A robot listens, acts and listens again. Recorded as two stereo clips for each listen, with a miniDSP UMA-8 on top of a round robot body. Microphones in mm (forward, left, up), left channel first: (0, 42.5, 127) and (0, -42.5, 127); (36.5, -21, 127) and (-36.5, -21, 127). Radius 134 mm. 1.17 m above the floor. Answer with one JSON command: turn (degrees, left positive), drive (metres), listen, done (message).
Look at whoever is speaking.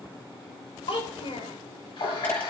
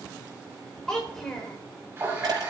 {"turn": 80}
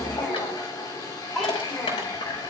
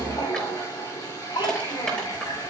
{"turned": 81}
{"done": "Facing the child speaking, 2 to 4 m away."}